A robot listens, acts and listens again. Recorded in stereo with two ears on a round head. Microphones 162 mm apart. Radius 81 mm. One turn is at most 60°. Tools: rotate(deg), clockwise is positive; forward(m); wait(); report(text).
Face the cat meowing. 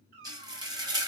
rotate(60)
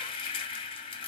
wait()
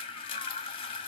wait()
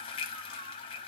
report("I heard a cat meowing, but can't make it out now. It was about straight ahead or 60° right.")